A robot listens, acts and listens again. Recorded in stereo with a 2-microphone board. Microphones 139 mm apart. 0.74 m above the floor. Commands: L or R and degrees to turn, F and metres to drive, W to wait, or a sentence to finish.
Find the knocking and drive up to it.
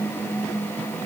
W
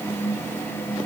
W
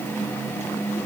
I can't make out knocking to turn to.